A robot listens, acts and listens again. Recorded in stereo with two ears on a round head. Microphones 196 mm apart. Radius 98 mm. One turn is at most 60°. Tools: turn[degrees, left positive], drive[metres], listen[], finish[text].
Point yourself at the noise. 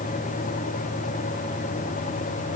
Action: listen[]
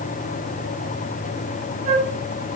Thought: The flute: about 35° right or 145° right.
Action: turn[-35]
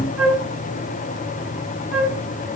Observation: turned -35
Action: finish[Facing the flute, 2 to 4 m away.]